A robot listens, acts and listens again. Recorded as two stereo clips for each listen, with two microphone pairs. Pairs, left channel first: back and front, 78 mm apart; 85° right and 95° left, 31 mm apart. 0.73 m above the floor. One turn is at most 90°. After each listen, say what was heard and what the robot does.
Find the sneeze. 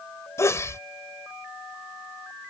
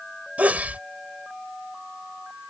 The sneeze: 125° left. Turn 90° left.
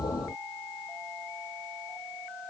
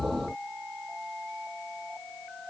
Nothing new. It was at 35° left. Turn 35° left.
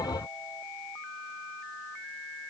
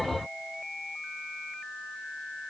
I heard a sneeze from this way, but can't make it out now.